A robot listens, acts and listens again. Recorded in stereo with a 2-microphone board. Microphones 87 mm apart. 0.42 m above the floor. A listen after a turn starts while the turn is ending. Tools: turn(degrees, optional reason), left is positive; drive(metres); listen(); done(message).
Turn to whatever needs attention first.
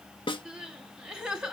turn(degrees=-30)
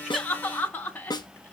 turn(degrees=20, reason="So it is at 20° left.")
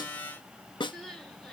done("Facing the crying, 2 to 4 m away.")